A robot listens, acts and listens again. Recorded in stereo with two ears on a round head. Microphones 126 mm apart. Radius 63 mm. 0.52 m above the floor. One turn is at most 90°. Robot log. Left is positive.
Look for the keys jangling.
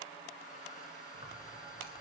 cmd yaw +90
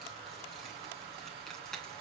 end: Facing the keys jangling.